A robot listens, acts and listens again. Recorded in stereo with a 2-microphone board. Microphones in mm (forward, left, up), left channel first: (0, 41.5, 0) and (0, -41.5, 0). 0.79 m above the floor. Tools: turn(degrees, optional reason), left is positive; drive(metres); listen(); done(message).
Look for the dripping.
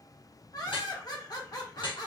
turn(degrees=90)
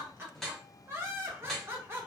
done("Facing the dripping.")